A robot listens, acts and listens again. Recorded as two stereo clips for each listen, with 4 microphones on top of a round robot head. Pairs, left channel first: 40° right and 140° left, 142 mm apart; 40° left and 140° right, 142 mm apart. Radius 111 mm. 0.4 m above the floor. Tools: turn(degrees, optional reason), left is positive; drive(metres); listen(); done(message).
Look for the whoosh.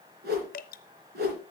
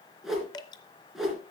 turn(degrees=135, reason="The whoosh: 135° left.")
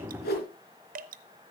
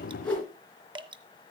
turn(degrees=-40, reason="The whoosh is now 40° right.")
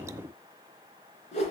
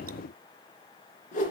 done("Found it: a whoosh, straight ahead.")